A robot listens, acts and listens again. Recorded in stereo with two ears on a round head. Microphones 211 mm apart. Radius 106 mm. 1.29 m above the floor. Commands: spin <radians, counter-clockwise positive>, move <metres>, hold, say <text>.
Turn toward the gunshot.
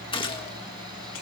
spin 0.35
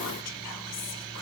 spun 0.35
hold
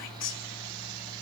say I heard a gunshot, but can't make it out now. It was about straight ahead or 140° left.